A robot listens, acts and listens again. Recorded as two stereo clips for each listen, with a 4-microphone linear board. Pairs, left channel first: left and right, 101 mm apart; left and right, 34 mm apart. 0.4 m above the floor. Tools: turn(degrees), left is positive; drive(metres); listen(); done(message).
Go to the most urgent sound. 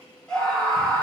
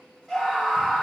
turn(degrees=30)
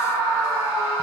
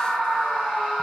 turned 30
turn(degrees=140)
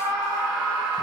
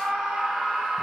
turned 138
drive(metres=1.0)
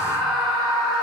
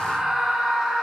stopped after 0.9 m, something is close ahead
done("Arrived at the scream, straight ahead.")